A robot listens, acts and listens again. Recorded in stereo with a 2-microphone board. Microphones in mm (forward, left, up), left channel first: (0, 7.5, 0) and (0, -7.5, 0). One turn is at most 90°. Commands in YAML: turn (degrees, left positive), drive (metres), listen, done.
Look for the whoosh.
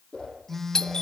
turn: 70
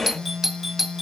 listen: true
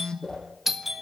turn: 40
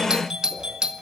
listen: true
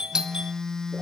listen: true
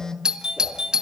done: "I heard a whoosh from this way, but can't make it out now."